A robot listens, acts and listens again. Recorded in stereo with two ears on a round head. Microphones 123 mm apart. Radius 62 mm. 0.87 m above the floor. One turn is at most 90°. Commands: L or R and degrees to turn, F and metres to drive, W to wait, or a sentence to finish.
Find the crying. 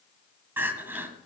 R15
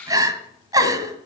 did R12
R90
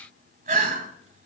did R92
R60
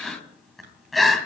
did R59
Found it: crying, straight ahead, 1 to 2 m away.